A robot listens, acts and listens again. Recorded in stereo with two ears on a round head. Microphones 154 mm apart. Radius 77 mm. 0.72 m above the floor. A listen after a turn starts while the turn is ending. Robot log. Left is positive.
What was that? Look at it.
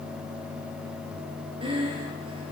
note: The breathing: about 30° right or 150° right.
cmd yaw -30
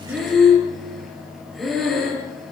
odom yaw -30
end: Facing the breathing.